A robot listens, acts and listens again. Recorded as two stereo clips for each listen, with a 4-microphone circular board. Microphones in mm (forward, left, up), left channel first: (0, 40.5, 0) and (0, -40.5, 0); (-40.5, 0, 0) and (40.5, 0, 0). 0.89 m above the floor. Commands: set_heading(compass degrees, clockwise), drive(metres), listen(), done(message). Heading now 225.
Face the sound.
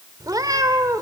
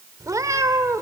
set_heading(275)
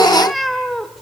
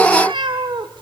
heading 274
done("Found it: a cat meowing, straight ahead, 1 to 2 m away.")